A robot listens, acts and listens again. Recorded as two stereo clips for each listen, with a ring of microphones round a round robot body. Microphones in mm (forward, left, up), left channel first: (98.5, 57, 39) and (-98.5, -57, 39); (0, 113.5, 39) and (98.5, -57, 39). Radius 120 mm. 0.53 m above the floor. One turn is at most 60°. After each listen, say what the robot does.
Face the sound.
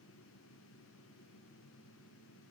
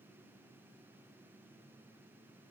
Keep listening.
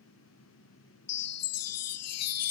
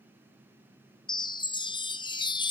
Turn 50° left.
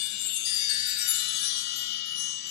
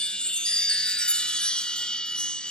Turn 35° left.
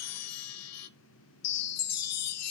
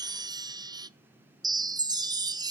Turn 10° left.
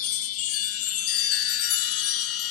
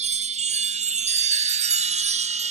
Facing the chime.